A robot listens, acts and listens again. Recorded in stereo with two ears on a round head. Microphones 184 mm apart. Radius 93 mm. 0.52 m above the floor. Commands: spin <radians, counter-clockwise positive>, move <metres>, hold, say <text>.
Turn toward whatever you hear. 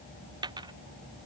spin -0.35
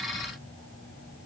hold
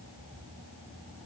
say I heard a dropped coin, but can't make it out now. It was about straight ahead or 140° right.